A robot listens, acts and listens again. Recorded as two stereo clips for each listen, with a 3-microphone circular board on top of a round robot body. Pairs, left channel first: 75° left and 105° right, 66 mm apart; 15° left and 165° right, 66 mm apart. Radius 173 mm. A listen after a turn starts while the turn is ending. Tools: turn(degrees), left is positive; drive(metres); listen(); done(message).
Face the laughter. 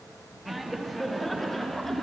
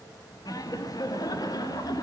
turn(degrees=-15)
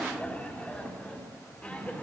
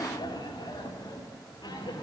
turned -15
done("Found it: laughter, straight ahead.")